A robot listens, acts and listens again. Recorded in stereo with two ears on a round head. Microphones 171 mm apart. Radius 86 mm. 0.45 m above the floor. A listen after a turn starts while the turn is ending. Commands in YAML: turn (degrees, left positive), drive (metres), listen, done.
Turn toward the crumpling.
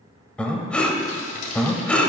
turn: 45
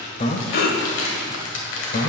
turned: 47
turn: 80
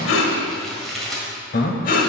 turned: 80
done: "Facing the crumpling."